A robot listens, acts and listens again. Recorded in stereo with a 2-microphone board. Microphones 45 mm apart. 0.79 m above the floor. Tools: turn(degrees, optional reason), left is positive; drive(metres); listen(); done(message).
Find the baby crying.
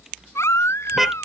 turn(degrees=90)
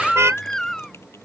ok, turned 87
turn(degrees=10, reason="So it is at 10° left.")
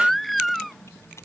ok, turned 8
done("Facing the baby crying.")